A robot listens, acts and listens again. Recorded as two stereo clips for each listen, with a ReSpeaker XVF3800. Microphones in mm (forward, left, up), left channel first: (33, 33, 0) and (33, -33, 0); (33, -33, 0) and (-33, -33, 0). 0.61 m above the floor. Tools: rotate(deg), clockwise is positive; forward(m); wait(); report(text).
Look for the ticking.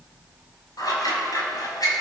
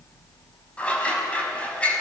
wait()
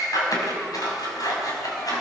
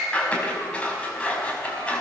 wait()
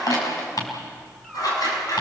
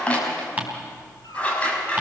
rotate(-110)
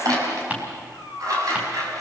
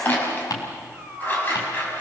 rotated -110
rotate(20)
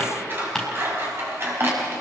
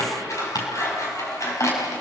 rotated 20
report("Found it: ticking, straight ahead, 2 to 4 m away.")